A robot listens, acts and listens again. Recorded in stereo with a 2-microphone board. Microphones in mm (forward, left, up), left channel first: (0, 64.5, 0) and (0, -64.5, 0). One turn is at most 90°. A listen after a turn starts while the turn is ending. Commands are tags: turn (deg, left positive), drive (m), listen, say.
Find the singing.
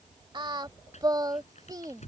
<turn deg="-30"/>
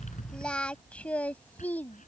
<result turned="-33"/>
<turn deg="15"/>
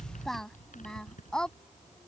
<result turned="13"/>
<say>Found it: singing, straight ahead.</say>